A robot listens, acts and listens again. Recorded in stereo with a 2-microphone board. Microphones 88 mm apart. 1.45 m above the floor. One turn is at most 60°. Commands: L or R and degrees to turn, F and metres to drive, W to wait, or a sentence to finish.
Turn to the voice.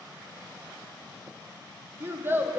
R25
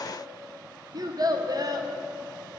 R60
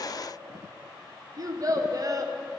R50
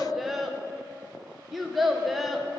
Found it: a child speaking, straight ahead.